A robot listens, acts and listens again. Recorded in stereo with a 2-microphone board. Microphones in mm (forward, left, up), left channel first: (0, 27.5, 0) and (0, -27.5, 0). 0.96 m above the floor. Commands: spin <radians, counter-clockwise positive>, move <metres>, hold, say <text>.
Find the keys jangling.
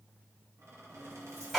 spin -0.87
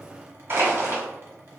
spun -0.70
hold
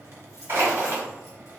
spin -1.57
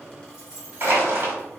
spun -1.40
spin -0.17
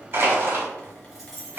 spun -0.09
say Found it: keys jangling, straight ahead.